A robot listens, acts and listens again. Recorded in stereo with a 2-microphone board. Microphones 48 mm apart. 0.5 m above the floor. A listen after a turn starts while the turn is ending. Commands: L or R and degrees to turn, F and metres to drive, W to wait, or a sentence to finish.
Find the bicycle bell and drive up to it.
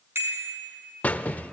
R55
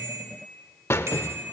R70
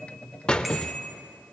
F1.0
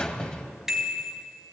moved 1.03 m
F1.0
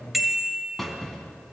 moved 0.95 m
F1.0
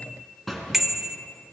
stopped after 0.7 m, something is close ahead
I am next to the bicycle bell.